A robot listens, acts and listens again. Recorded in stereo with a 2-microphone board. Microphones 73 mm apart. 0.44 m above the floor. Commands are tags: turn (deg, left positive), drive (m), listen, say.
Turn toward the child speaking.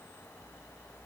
<listen/>
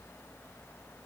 <listen/>
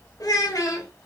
<turn deg="55"/>
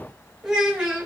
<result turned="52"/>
<turn deg="-20"/>
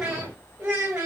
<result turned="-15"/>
<turn deg="-25"/>
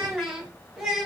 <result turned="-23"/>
<turn deg="-10"/>
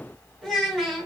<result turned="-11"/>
<say>Found it: a child speaking, straight ahead, 2 to 4 m away.</say>